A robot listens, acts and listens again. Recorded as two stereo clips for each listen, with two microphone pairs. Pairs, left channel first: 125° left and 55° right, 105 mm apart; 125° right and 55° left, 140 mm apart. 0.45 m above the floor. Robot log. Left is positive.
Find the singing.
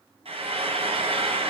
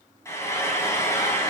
cmd idle
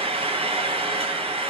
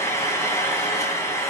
cmd idle
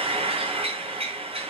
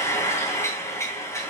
end: I can't make out singing to turn to.